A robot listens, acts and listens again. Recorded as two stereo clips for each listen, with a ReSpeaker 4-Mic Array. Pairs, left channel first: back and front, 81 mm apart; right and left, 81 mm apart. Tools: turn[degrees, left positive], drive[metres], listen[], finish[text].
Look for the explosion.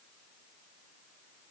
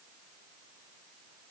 Action: listen[]
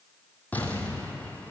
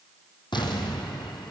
Thought: The explosion: 110° right.
Action: turn[-110]
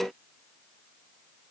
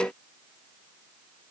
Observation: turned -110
Action: finish[Facing where the explosion came from. I can't hear it now.]